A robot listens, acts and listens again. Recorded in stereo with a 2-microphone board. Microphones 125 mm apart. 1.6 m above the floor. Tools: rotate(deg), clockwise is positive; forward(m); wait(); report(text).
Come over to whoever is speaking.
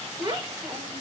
rotate(30)
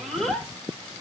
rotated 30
forward(1.0)
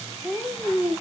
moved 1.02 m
forward(1.0)
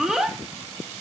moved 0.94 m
forward(1.0)
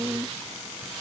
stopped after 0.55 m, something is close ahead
rotate(15)
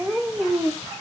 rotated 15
report("I am next to the child speaking.")